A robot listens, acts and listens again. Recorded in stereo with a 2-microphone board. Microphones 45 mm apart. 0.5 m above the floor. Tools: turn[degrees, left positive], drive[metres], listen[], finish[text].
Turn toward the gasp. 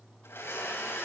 Action: listen[]
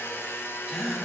Action: turn[30]
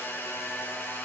Action: listen[]
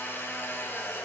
Action: finish[I heard a gasp, but can't make it out now. It was about 30° right or 150° left.]